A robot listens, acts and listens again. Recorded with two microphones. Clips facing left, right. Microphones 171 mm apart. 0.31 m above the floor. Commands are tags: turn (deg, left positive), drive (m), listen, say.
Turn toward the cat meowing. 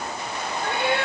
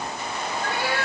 <turn deg="20"/>
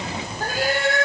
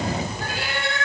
<turn deg="140"/>
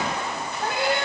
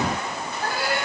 <turn deg="20"/>
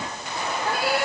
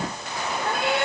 <say>Found it: a cat meowing, straight ahead, 2 to 4 m away.</say>